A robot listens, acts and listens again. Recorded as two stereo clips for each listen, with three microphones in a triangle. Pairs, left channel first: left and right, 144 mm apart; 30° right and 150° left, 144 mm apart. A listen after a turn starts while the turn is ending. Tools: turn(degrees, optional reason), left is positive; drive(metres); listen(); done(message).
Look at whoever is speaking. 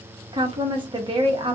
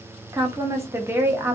turn(degrees=-140, reason="The woman speaking: 140° right.")
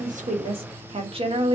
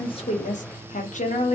turn(degrees=-45, reason="The woman speaking is now 45° right.")
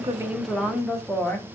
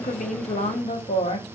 done("Facing the woman speaking, under 1 m away.")